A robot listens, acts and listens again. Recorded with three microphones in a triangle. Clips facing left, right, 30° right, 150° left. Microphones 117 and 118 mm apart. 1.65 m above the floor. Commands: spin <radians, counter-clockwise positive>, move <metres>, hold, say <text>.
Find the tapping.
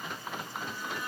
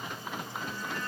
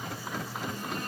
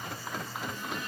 hold
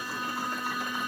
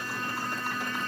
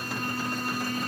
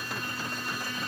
hold
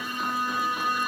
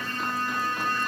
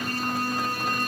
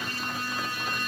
say I can't make out tapping to turn to.